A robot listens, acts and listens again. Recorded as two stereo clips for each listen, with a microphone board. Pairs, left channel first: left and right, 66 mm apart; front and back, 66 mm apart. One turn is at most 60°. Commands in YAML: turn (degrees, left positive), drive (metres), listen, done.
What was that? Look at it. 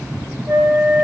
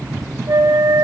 turn: -60
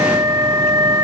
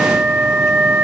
turn: -60
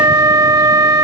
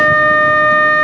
turn: -60
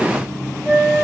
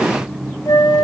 turn: -20
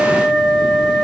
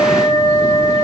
done: "Facing the flute."